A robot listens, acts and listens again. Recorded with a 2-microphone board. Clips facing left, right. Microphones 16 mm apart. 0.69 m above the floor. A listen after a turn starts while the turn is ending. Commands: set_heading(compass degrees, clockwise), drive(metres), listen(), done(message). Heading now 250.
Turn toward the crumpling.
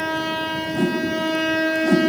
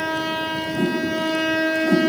listen()
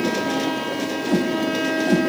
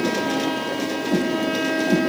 listen()
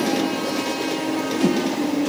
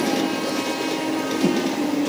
done("I can't make out crumpling, only a whoosh.")